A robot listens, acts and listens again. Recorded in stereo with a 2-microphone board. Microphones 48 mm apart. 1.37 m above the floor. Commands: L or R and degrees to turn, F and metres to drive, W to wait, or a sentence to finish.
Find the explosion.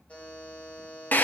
W
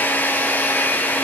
W
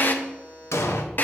L70
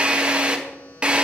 W
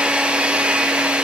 I heard an explosion, but can't make it out now. It was about straight ahead or 40° left.